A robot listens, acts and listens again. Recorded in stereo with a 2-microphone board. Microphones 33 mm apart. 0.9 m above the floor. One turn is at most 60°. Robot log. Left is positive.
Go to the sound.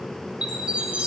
note: The chime: about 30° right or 150° right.
cmd yaw -30
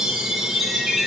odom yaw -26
cmd fwd 1.0
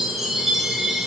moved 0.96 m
cmd fwd 1.0
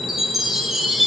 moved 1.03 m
cmd fwd 1.0
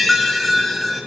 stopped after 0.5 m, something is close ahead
end: Arrived at the chime, straight ahead.